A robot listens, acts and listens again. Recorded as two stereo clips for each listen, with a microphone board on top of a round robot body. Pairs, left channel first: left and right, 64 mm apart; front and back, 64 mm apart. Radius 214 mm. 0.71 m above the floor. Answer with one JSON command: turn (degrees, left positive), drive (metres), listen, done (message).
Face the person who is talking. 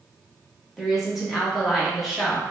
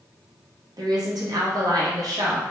{"turn": 180}
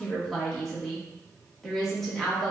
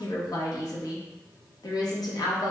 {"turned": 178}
{"done": "Found it: a woman speaking, straight ahead, 1 to 2 m away."}